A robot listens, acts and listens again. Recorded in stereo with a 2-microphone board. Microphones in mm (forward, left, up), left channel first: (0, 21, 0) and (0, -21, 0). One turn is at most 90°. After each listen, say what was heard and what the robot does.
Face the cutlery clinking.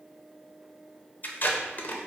Keep listening.
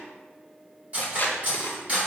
The cutlery clinking: about 30° right or 150° right. Turn 30° right.
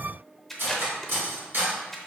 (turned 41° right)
So it is at 110° right. Turn 90° right.
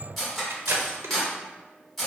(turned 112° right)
Found it: cutlery clinking, straight ahead, 1 to 2 m away.